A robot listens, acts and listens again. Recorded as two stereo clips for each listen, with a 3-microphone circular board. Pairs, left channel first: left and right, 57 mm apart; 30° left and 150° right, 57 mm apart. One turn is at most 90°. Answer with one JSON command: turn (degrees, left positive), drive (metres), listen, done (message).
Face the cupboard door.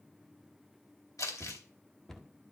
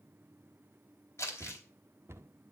{"turn": 90}
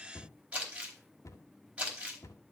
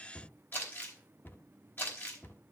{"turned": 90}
{"turn": 80}
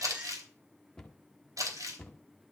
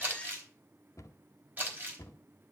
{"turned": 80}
{"turn": 10}
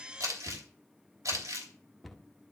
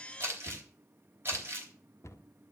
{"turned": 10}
{"done": "Found it: a cupboard door, straight ahead."}